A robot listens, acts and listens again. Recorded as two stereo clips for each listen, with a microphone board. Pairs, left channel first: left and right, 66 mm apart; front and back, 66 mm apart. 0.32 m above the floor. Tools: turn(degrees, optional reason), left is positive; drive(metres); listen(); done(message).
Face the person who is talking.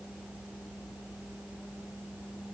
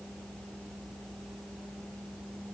listen()
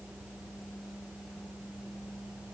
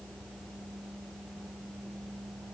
listen()
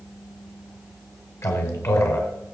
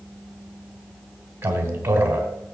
turn(degrees=130, reason="The man speaking: 130° left.")
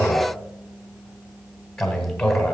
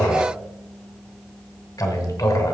done("Facing the man speaking.")